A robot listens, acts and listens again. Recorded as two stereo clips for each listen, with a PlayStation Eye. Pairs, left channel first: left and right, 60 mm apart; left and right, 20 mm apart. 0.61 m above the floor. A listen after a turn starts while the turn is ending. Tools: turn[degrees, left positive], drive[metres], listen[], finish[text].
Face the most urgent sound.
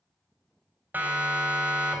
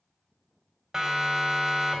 Thought: The siren: about 25° right or 155° right.
Action: turn[-25]
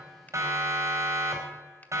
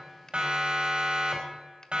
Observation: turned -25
Thought: So it is at 125° right.
Action: turn[-125]
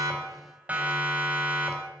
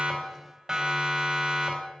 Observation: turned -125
Thought: The siren is now 25° right.
Action: turn[-25]
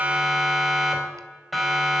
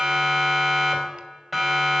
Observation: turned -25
Action: finish[Found it: a siren, straight ahead, 2 to 4 m away.]